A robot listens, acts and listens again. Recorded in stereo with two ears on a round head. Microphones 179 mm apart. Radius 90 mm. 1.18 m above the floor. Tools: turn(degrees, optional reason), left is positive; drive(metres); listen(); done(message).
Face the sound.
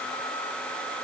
listen()
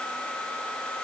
listen()
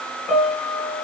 turn(degrees=30)
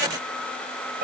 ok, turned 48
turn(degrees=-45, reason="So it is at 45° right.")
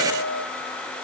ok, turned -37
turn(degrees=-10, reason="The piano is now 10° right.")
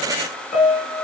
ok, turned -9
done("Facing the piano, 2 to 4 m away.")